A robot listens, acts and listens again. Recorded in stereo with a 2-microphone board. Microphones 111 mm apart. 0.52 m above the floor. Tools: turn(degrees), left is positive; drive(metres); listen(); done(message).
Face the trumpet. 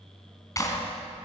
listen()
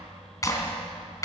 listen()
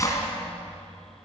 done("I can't make out a trumpet to turn to.")